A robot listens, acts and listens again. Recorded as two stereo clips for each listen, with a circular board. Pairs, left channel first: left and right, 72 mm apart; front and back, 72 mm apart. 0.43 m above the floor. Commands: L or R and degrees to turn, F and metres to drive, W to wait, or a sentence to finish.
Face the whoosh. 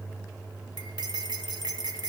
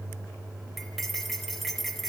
W
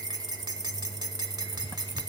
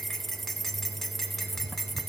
W
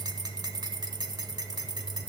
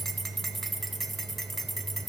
I can't make out a whoosh to turn to.